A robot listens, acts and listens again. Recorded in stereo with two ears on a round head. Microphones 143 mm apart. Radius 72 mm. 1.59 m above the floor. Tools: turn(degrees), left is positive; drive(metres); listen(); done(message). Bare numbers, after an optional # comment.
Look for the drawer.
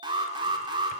listen()
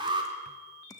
listen()
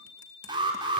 done("I can't make out a drawer, only an alarm.")